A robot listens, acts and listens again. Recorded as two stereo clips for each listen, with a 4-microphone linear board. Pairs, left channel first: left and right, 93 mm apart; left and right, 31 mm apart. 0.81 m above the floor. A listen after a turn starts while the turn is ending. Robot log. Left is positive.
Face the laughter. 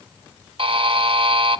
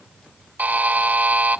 cmd idle
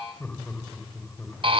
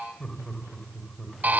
note: The laughter: about 20° left or 160° left.
cmd yaw +20
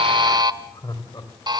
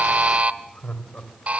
note: So it is at 135° left.
cmd yaw +135
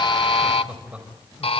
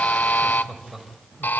note: The laughter is now 10° right.
cmd yaw -10
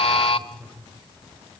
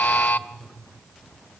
end: Found it: laughter, straight ahead, over 4 m away.